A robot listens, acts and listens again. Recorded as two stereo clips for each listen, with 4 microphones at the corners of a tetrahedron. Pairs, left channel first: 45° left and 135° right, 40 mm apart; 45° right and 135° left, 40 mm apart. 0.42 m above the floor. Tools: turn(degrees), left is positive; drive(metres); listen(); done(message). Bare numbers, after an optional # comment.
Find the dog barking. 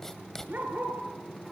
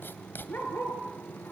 # The dog barking: 90° right.
turn(-90)
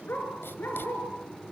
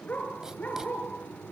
done("Found it: a dog barking, straight ahead.")